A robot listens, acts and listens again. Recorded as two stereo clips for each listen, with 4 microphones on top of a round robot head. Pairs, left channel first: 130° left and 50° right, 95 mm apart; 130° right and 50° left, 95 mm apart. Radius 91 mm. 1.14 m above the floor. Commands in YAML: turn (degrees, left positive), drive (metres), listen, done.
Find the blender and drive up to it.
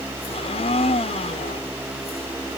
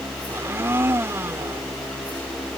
turn: 115
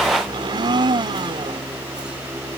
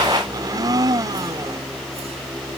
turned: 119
drive: 1.0
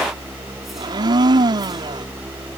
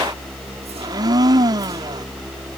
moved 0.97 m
drive: 1.0
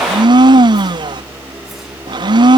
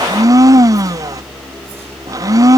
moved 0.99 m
drive: 1.0
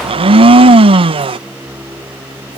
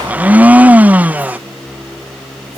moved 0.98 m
turn: -25
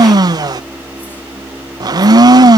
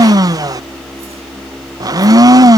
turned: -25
drive: 1.0
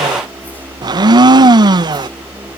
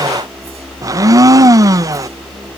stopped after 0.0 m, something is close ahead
done: "I am next to the blender."